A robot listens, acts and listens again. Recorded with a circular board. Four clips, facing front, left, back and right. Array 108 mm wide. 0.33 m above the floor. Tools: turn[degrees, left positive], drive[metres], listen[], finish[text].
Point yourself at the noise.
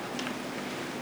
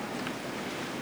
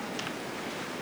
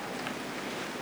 Action: listen[]
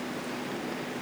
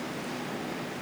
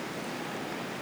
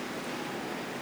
Action: listen[]
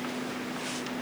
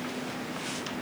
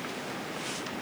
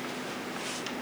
Action: finish[I can't make out anything to turn to.]